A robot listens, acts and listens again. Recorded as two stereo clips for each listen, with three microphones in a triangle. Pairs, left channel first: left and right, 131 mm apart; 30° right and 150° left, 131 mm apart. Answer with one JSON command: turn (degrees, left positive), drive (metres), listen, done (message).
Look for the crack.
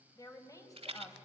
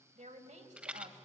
{"listen": true}
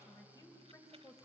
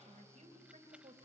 {"listen": true}
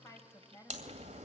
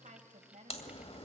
{"turn": -70}
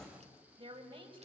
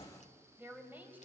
{"done": "Facing the crack, 2 to 4 m away."}